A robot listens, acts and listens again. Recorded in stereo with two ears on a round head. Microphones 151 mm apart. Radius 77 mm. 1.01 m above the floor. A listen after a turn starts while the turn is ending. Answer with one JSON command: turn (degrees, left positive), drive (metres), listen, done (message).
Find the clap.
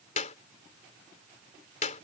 {"turn": 45}
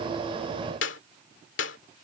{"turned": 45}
{"turn": 90}
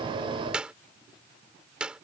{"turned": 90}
{"done": "Facing the clap."}